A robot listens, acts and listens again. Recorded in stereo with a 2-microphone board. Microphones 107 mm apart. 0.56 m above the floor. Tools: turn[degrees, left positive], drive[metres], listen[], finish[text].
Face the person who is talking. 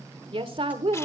Thought: The woman speaking: about 55° right or 125° right.
Action: turn[-55]
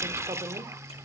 Action: listen[]
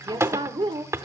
Thought: So it is at 55° right.
Action: turn[-55]
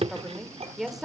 Action: finish[Facing the woman speaking, 1 to 2 m away.]